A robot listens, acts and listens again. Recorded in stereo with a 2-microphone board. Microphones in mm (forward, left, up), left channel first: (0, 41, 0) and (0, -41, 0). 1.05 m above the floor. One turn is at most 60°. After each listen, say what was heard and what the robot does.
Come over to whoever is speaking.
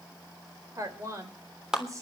The woman speaking: about 40° right or 140° right. Turn 40° right.
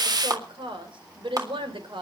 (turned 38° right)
So it is at 105° right. Turn 60° right.
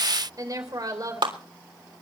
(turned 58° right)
The woman speaking is now 45° right. Turn 45° right.
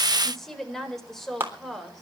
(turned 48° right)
Drive 1.0 m forward.
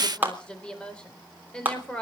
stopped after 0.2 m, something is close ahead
The woman speaking is now 10° left. Turn 10° left.
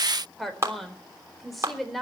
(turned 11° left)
Blocked. The woman speaking is further on, straight ahead.